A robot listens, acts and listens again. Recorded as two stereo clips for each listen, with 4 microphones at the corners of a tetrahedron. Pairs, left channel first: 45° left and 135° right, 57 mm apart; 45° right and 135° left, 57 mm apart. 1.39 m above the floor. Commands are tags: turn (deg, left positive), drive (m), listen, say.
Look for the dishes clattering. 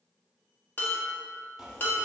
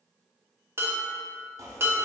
<turn deg="95"/>
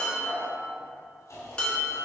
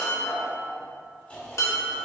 <turn deg="-25"/>
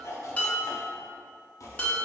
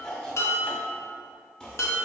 <turn deg="-15"/>
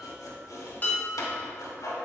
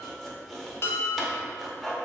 <say>Found it: dishes clattering, straight ahead.</say>